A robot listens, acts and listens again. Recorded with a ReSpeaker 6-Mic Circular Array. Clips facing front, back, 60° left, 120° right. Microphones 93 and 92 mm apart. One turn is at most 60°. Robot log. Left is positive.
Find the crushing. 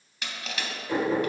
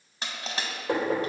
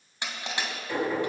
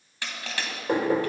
note: The crushing: 130° left.
cmd yaw +60
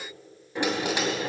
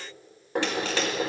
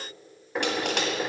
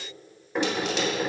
note: Nothing new. It was at 70° left.
cmd yaw +60
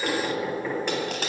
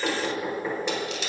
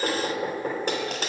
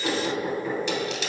note: The crushing is now 25° left.
cmd yaw +25
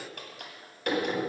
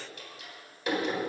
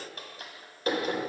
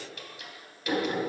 note: The crushing is now 15° left.
cmd yaw +15
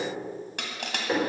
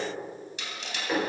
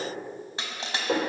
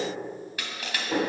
end: Facing the crushing, 2 to 4 m away.